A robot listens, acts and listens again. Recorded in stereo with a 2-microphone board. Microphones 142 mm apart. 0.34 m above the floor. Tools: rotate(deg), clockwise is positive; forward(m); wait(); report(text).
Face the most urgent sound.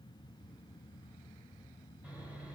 wait()
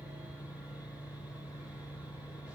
wait()
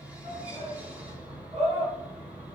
rotate(50)
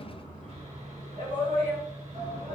rotate(75)
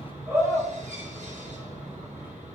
rotate(20)
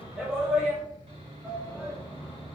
report("Found it: a shout, straight ahead.")